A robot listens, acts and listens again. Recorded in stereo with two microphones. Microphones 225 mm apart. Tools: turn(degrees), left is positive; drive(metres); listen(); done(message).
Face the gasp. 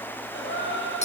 turn(degrees=60)
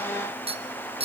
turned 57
listen()
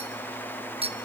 done("I heard a gasp, but can't make it out now. It was about 5° left or 60° left.")